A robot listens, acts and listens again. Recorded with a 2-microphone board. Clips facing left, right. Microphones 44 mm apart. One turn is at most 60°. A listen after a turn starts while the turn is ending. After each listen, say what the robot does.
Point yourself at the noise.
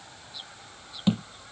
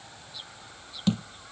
Turn 20° left.
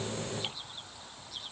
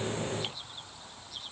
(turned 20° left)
Keep listening.
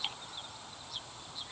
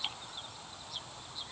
I heard a thud, but can't make it out now. It was about straight ahead or 140° left.